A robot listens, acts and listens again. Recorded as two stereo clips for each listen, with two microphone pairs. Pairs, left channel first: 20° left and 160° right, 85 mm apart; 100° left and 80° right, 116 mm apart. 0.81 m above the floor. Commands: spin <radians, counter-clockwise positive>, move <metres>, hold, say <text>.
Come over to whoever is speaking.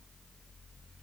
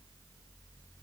hold
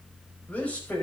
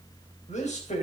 spin 1.66
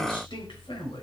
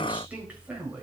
move 1.0
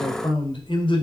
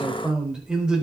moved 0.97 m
move 1.0
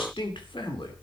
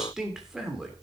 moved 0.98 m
move 1.0
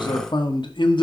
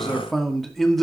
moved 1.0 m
spin 0.26
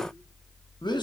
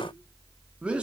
move 1.0
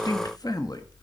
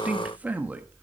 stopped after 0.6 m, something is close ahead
say I am next to the man speaking.